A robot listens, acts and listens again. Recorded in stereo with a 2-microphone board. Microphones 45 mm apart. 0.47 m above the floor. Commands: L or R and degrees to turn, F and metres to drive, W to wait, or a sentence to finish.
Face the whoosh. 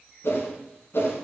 L70
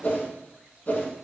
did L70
L40
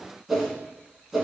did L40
Found it: a whoosh, straight ahead, 1 to 2 m away.